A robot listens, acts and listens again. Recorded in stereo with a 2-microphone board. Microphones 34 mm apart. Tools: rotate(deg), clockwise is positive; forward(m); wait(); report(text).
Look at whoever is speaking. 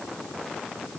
wait()
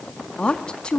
rotate(-25)
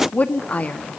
rotate(-125)
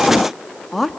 report("Facing the woman speaking.")